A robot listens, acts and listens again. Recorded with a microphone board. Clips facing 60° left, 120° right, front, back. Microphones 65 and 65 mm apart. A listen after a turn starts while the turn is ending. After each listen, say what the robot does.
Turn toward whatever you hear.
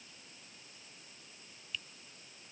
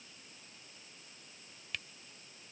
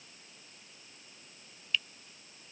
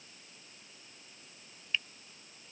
Turn 120° right.
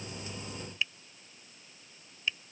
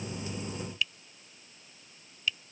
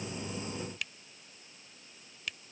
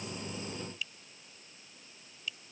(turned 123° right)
Found it: a finger snap, straight ahead.